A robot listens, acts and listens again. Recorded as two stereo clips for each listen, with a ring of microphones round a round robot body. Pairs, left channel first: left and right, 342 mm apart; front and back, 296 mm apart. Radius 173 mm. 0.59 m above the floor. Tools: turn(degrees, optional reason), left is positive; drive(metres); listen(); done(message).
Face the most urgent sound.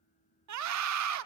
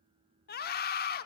turn(degrees=-55, reason="The scream: 55° right.")
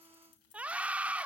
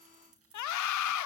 done("Facing the scream.")